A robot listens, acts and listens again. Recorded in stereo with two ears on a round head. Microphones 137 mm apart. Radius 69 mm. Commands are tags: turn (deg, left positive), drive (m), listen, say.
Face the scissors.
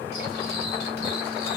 <listen/>
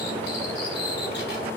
<listen/>
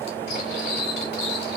<say>I can't make out scissors, only cutlery clinking.</say>